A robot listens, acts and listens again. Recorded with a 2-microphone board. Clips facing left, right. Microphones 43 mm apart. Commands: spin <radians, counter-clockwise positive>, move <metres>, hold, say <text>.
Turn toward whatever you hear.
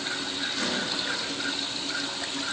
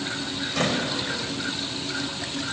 spin -1.22
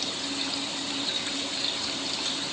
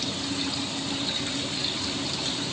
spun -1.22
hold
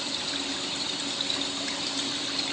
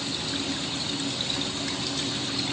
say I heard a door slam, but can't make it out now. It was about straight ahead or 40° right.